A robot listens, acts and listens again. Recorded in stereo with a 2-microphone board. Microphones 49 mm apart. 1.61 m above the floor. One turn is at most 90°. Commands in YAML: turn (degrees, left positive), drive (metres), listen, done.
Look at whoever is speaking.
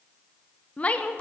turn: 30
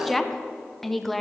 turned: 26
done: "Facing the woman speaking, under 1 m away."